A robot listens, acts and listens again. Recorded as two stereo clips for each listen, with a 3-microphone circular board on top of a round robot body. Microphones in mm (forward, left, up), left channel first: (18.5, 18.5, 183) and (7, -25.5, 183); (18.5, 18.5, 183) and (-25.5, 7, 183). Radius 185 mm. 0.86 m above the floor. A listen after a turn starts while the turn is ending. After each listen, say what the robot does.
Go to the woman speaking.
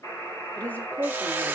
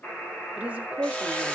Turn 135° left.
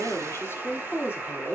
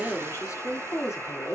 Turn 35° left.
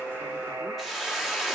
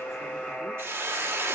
Keep listening.
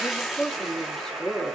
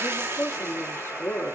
Drive 1.0 m forward.
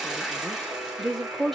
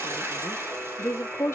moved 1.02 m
Turn 10° right.
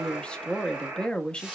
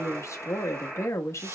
Drive 1.0 m forward.
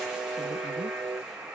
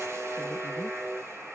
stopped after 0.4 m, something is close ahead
Keep listening.
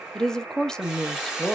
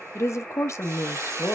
I am next to the woman speaking.